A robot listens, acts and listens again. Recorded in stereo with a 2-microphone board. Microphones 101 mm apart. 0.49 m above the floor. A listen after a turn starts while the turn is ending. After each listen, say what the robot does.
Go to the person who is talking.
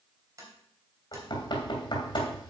Keep listening.
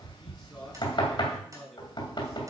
Turn 30° left.
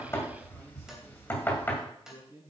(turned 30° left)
Turn 30° right.
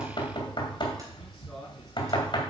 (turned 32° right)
Drive 1.0 m forward.
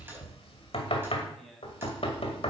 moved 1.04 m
Drive 1.0 m forward.
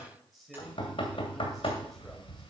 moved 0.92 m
Drive 1.0 m forward.
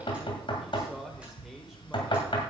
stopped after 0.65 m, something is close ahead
I am next to the man speaking.